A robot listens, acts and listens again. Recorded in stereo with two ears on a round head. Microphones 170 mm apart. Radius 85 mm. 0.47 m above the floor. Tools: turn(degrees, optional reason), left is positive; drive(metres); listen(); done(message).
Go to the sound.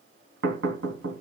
turn(degrees=-90)
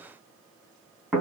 drive(metres=1.0)
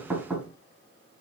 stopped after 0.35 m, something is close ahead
done("Blocked. The knocking is further on, straight ahead.")